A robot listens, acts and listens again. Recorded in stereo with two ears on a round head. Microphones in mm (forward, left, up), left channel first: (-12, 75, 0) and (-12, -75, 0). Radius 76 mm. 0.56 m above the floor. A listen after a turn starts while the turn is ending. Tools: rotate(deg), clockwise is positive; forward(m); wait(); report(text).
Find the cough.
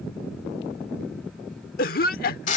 rotate(-60)
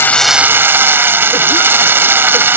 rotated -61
wait()
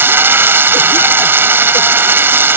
wait()
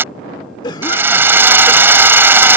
rotate(-30)
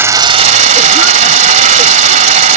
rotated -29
wait()
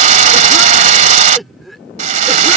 report("Found it: a cough, straight ahead.")